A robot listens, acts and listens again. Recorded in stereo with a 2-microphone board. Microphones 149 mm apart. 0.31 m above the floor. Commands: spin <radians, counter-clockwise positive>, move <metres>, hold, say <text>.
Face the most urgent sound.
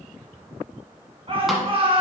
spin -0.70
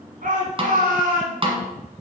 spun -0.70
spin -1.75
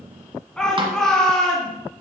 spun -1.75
say Facing the shout, 2 to 4 m away.